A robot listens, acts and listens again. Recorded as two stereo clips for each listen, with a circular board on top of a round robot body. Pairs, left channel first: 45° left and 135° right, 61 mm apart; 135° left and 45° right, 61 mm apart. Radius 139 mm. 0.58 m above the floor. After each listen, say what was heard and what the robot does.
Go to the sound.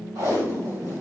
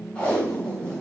The tape being pulled: 155° right. Turn 155° right.
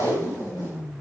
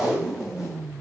The tape being pulled is now 40° left. Turn 40° left.
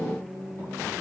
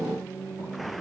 Keep listening.
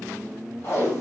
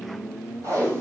Drive 1.0 m forward.
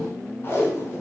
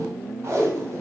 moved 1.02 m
Drive 1.0 m forward.
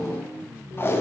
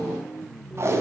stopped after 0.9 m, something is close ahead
I am next to the tape being pulled.